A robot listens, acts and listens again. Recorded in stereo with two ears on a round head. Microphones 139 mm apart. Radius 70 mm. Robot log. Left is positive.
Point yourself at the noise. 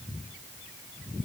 cmd idle
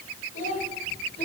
note: The child speaking: about 50° left or 130° left.
cmd yaw +50
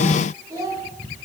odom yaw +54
note: So it is at 25° right.
cmd yaw -25
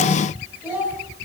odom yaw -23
note: The child speaking is now 15° right.
cmd yaw -15
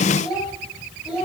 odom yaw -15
end: Facing the child speaking.